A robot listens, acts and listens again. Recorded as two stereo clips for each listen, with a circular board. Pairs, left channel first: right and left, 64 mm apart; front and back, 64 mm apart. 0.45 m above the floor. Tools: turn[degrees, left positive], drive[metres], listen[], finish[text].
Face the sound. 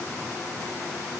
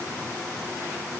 Action: listen[]
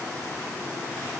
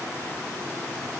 Action: listen[]
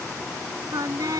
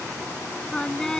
Thought: The singing: 80° left.
Action: turn[80]
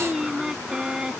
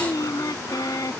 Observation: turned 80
Thought: The singing is now 15° left.
Action: turn[15]
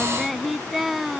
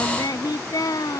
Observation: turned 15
Action: finish[Found it: singing, straight ahead.]